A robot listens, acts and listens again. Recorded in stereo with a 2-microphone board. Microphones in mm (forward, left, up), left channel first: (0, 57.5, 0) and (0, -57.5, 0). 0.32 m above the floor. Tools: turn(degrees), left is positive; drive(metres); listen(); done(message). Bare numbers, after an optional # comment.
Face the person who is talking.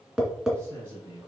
# The man speaking: about 20° right or 160° right.
turn(-20)
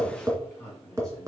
done("Facing the man speaking.")